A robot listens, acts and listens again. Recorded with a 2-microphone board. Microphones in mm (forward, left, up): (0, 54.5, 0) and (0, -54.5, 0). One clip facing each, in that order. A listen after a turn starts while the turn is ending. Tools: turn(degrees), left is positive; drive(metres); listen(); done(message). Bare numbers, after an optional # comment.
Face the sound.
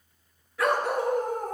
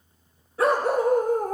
# The dog barking: about 55° right or 125° right.
turn(-55)
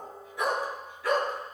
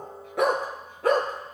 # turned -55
# So it is at 45° right.
turn(-45)
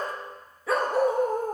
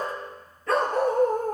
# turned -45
# The dog barking is now 15° left.
turn(15)
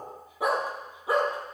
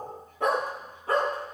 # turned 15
# The dog barking is now 15° left.
turn(15)
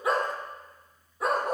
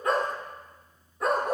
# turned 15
done("Facing the dog barking, 2 to 4 m away.")